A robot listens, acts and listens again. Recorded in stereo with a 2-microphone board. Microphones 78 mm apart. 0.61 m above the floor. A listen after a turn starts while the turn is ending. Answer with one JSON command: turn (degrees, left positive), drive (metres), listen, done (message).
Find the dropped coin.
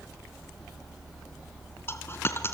{"turn": 30}
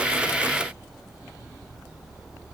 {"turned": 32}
{"listen": true}
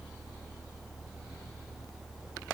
{"done": "I heard a dropped coin, but can't make it out now. It was about straight ahead or 115° left."}